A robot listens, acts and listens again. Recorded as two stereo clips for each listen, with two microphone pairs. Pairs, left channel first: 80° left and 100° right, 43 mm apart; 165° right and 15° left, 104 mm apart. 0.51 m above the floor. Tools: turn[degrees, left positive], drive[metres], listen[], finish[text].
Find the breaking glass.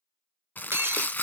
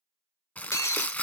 Thought: The breaking glass: 105° right.
Action: turn[-105]
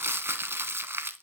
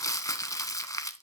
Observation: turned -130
Thought: Nothing new. It was at 25° left.
Action: turn[25]
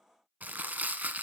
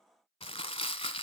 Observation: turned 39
Thought: Nothing new. It was at 10° right.
Action: turn[-10]
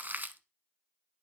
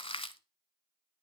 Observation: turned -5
Action: finish[I heard breaking glass from this way, but can't make it out now.]